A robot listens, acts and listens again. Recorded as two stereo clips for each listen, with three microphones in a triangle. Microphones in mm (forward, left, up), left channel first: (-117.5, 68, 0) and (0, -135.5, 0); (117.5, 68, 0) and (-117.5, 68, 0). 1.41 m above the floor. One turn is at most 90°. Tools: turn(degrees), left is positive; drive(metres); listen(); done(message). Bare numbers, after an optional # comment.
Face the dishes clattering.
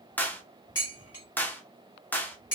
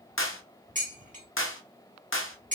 # The dishes clattering: 120° left.
turn(90)
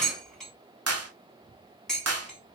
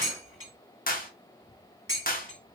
# The dishes clattering is now 30° left.
turn(30)
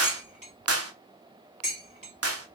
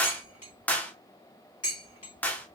done("Facing the dishes clattering.")